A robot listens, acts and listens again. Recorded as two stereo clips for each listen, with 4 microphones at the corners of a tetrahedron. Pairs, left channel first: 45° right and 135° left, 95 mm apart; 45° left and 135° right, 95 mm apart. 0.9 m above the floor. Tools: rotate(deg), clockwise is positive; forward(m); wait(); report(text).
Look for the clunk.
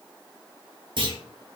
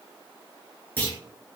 rotate(-115)
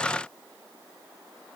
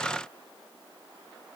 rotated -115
report("Facing where the clunk came from. I can't hear it now.")